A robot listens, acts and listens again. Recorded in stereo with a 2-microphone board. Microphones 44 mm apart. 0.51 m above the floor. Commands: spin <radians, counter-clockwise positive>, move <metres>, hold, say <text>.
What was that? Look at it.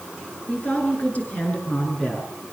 spin 0.61
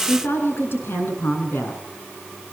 spin 2.09
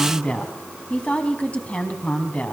spin 0.52
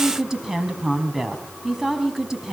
spin -0.26
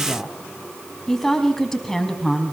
say Found it: a woman speaking, straight ahead, 2 to 4 m away.